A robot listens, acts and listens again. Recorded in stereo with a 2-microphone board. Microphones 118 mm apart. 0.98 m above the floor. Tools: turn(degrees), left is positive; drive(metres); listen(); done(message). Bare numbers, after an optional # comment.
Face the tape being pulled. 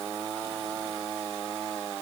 listen()
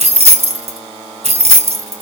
listen()
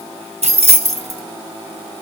done("I can't make out tape being pulled to turn to.")